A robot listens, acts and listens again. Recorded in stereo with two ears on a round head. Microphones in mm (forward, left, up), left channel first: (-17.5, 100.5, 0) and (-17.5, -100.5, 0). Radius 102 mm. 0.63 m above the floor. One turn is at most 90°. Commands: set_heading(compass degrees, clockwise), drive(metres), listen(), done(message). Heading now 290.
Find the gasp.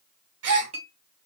set_heading(5)
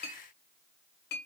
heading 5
listen()
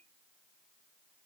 done("I heard a gasp, but can't make it out now. It was about straight ahead or 30° right.")